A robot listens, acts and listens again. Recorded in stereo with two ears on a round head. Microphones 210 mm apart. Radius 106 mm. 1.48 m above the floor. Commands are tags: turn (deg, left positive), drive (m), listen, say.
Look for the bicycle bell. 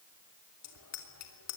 <turn deg="90"/>
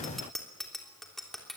<say>Facing the bicycle bell.</say>